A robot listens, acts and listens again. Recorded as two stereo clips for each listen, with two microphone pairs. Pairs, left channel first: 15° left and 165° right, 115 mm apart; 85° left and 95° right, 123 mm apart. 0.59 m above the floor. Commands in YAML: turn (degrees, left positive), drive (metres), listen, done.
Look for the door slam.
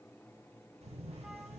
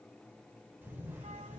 listen: true
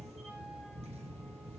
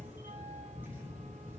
listen: true
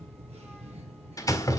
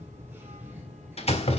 turn: 65
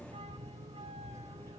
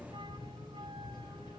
done: "Facing where the door slam came from. I can't hear it now."